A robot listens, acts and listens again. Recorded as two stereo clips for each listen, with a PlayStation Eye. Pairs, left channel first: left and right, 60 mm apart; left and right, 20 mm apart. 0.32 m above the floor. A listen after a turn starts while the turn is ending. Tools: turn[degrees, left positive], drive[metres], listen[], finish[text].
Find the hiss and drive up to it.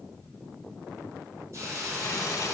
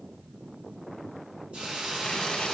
Thought: The hiss: about 60° right or 120° right.
Action: turn[-60]
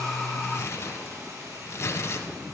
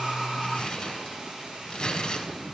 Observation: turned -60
Thought: So it is at 55° right.
Action: turn[-55]
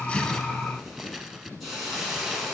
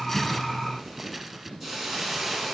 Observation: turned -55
Action: drive[1.0]
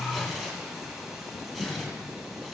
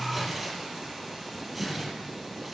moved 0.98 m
Action: drive[1.0]
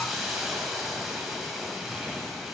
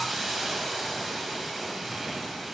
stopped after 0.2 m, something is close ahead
Action: finish[Arrived at the hiss, straight ahead.]